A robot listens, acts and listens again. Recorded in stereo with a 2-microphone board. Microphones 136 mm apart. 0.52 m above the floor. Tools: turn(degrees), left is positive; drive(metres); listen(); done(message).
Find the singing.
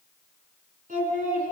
turn(degrees=-90)
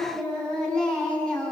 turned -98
done("Facing the singing, over 4 m away.")